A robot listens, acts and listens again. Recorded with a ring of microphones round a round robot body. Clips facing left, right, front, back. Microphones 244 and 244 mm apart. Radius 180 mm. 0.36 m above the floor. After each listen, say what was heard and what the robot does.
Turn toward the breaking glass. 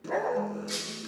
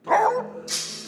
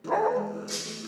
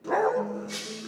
The breaking glass: 60° right. Turn 60° right.
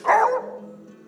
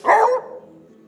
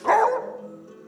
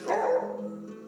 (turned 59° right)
I heard breaking glass from this way, but can't make it out now.